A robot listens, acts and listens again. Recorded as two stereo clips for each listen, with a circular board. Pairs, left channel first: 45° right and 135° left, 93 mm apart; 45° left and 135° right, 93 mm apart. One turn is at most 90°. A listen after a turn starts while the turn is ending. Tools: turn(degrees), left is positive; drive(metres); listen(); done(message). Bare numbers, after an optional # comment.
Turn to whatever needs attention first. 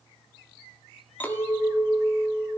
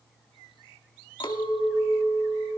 listen()
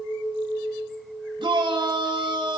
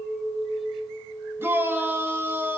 # The shout: 160° left.
turn(90)
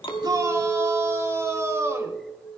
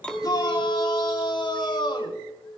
# The shout is now 75° left.
turn(75)
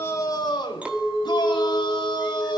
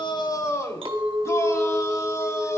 # The shout is now 10° right.
turn(-10)
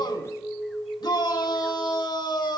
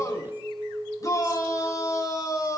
done("Found it: a shout, straight ahead, 2 to 4 m away.")